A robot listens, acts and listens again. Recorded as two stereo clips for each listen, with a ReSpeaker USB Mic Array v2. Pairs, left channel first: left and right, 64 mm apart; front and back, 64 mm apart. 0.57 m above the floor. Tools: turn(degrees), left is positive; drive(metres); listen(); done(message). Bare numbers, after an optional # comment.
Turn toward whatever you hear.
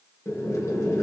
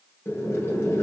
# The boiling: 50° left.
turn(50)
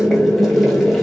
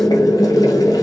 done("Facing the boiling.")